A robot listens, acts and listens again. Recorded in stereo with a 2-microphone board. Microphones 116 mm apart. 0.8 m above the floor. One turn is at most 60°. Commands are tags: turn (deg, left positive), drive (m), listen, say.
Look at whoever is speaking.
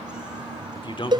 <turn deg="45"/>
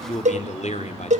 <turn deg="60"/>
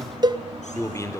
<turn deg="25"/>
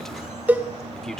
<say>Facing the man speaking.</say>